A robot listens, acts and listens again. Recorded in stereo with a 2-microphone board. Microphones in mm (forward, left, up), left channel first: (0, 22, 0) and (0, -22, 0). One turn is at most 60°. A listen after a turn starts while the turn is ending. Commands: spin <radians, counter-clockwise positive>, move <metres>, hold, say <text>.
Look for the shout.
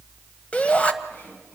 spin 0.44
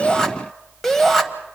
say Found it: a shout, straight ahead, 1 to 2 m away.